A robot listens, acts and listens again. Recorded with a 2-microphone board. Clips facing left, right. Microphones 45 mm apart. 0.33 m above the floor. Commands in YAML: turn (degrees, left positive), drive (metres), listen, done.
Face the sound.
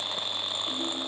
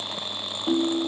turn: -60
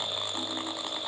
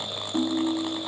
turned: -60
turn: -45
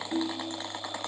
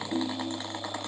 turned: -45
turn: 15
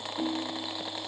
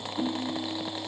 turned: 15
done: "Facing the ringtone."